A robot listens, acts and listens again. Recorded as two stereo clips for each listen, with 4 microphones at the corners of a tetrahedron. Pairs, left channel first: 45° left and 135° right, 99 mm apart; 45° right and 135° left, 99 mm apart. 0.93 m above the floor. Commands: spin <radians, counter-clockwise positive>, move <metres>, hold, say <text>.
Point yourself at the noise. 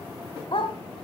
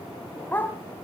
spin 0.44
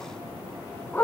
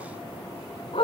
spin -0.44
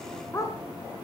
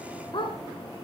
spin -0.17
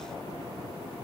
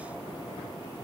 hold
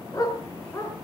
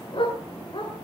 spin -0.17
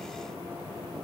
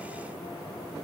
hold
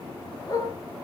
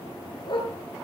say Found it: a dog barking, straight ahead.